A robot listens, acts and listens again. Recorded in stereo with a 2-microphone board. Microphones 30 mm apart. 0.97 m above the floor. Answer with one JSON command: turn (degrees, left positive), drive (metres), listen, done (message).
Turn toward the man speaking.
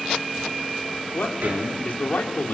{"turn": 70}
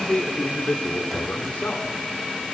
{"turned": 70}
{"turn": 60}
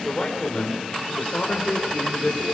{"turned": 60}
{"turn": 20}
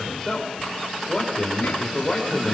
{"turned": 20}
{"turn": 10}
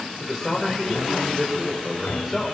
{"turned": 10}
{"done": "Found it: a man speaking, straight ahead, over 4 m away."}